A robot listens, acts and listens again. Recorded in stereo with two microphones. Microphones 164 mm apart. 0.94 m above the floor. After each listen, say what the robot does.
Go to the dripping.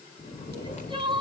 Keep listening.
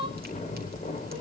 Keep listening.
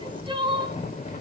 I can't make out dripping, only crying and snoring.